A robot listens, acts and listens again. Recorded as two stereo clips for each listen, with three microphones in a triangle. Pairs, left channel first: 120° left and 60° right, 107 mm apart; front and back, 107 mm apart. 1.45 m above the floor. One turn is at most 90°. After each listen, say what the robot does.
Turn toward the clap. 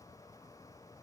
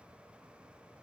Keep listening.
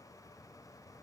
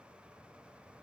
Keep listening.
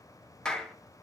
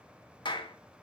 Turn 40° left.
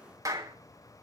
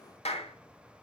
Found it: a clap, straight ahead, 1 to 2 m away.